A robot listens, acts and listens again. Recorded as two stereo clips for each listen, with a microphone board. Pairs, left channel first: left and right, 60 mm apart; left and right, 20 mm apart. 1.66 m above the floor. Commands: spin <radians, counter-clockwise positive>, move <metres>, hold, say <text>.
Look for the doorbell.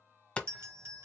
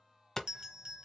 spin -0.79
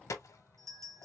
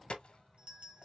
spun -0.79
spin -1.48
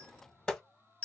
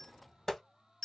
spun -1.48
spin 0.35
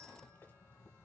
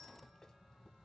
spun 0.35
hold
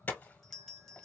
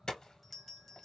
say Found it: a doorbell, straight ahead.